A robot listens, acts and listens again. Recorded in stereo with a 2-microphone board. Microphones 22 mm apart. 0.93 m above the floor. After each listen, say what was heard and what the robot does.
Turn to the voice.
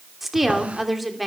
Turn 30° right.
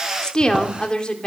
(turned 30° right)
So it is at 40° left. Turn 40° left.
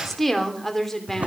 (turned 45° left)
The woman speaking is now 10° left. Turn 10° left.
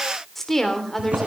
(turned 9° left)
The woman speaking is now 10° left. Turn 10° left.
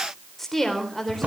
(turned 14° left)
The woman speaking is now 10° left. Turn 10° left.
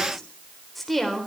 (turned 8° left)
Found it: a woman speaking, straight ahead.